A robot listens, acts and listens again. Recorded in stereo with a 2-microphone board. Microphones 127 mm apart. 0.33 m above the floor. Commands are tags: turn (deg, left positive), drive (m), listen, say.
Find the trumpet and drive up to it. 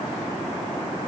<listen/>
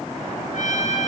<turn deg="90"/>
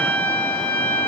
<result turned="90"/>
<turn deg="15"/>
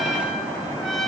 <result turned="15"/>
<drive m="1.0"/>
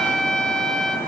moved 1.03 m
<drive m="1.0"/>
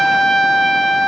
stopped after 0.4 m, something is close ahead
<say>Arrived at the trumpet, straight ahead.</say>